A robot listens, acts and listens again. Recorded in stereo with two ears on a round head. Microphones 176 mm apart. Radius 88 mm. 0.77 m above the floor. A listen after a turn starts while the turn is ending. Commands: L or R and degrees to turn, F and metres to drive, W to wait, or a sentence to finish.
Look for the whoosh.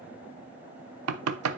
W
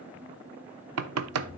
L30
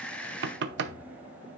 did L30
W
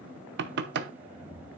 Facing the whoosh.